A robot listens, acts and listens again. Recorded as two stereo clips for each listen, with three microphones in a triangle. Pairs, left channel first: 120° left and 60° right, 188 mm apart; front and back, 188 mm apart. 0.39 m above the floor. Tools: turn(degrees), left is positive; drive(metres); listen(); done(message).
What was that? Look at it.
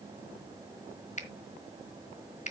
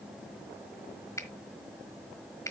turn(degrees=70)
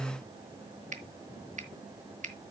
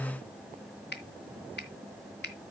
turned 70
turn(degrees=-15)
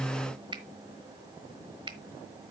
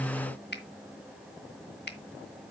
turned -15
done("Found it: a finger snap, straight ahead.")